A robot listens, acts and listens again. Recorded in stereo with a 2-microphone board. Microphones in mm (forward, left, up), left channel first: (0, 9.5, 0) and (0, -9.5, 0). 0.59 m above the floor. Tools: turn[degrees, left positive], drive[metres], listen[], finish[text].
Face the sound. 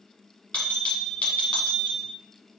Thought: The bell: about 75° left or 105° left.
Action: turn[75]
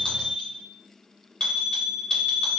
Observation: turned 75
Thought: So it is at 30° left.
Action: turn[30]
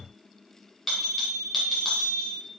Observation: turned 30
Action: finish[Facing the bell, 1 to 2 m away.]